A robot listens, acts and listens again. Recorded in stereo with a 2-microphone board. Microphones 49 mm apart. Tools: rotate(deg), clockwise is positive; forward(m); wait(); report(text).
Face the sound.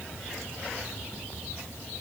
wait()
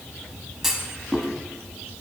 rotate(30)
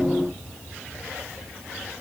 wait()
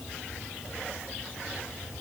report("I heard a clunk, but can't make it out now. It was about 25° left or 145° right.")